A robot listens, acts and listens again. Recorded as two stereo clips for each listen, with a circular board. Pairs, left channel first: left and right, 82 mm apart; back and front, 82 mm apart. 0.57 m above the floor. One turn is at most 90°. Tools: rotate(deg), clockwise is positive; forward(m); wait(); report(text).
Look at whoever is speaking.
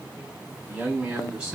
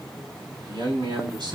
rotate(10)
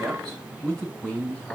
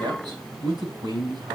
rotate(-15)
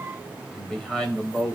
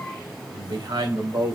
rotate(-15)
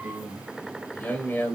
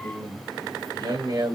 rotate(-25)
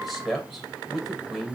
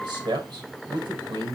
report("Found it: a man speaking, straight ahead, 2 to 4 m away.")